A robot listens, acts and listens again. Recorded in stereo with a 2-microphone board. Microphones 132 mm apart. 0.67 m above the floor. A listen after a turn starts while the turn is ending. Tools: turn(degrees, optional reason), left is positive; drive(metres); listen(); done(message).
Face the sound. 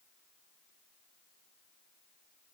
listen()
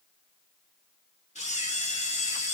turn(degrees=60, reason="The camera shutter: about 60° left or 120° left.")
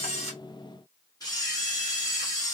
turn(degrees=35, reason="So it is at 35° left.")
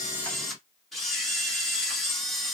done("Facing the camera shutter, 1 to 2 m away.")